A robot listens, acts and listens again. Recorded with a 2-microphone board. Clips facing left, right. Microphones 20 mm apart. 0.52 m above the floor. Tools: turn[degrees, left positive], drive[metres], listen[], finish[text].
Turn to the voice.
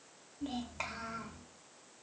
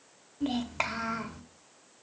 Thought: The child speaking: about 35° right or 145° right.
Action: turn[-35]
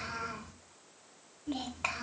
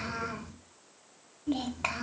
Action: finish[Facing the child speaking, 1 to 2 m away.]